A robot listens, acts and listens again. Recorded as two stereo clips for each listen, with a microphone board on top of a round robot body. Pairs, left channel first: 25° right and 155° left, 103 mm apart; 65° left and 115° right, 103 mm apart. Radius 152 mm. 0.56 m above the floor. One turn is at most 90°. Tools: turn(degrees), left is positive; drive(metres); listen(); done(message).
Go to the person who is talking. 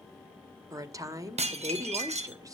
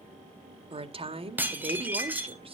turn(degrees=-90)
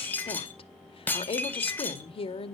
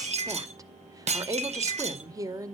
turn(degrees=-55)
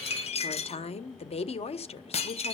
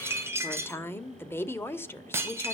drive(metres=1.0)
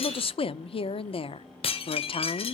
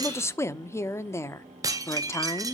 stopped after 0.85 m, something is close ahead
done("Arrived at the woman speaking, straight ahead.")